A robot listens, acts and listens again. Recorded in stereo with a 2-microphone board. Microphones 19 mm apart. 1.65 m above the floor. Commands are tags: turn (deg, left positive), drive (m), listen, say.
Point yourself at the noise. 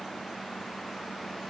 <listen/>
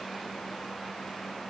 <listen/>
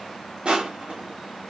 <turn deg="-65"/>
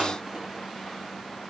<listen/>
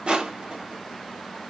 <turn deg="-50"/>
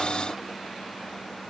<listen/>
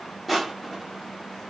<say>Facing the crushing.</say>